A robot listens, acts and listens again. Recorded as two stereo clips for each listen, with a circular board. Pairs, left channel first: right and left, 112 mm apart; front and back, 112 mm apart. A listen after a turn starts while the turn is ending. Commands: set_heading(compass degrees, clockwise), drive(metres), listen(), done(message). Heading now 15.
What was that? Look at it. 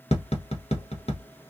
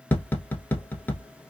set_heading(90)
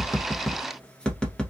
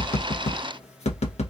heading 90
done("Found it: tapping, straight ahead, under 1 m away.")